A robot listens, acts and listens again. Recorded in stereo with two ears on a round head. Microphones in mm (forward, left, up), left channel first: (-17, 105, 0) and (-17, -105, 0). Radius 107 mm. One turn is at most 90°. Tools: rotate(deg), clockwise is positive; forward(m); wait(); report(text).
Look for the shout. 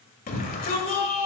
rotate(-40)
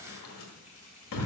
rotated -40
rotate(-90)
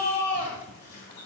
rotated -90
rotate(-45)
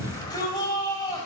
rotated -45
rotate(-20)
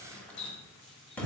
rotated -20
report("Facing the shout, 1 to 2 m away.")